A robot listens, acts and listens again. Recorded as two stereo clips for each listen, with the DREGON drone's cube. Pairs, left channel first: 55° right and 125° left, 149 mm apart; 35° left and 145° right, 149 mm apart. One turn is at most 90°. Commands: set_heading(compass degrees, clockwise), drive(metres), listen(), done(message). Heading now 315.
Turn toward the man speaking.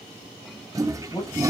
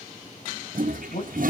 done("Facing the man speaking, over 4 m away.")